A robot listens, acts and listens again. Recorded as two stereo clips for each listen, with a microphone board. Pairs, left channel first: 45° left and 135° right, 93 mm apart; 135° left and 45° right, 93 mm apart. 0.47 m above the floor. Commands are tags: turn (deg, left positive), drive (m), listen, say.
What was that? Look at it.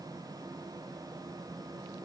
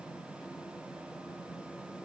<listen/>
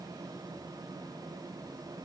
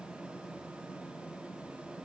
<listen/>
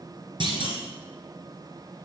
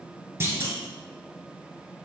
<turn deg="-110"/>
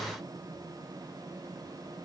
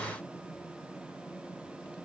<say>I heard a clunk from this way, but can't make it out now.</say>